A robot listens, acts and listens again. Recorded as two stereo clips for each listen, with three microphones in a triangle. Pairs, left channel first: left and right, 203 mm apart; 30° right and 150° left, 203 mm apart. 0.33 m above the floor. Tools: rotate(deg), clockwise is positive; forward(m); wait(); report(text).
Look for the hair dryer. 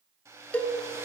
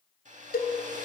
rotate(160)
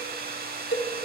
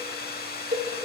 rotate(60)
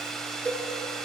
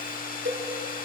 report("Found it: a hair dryer, straight ahead.")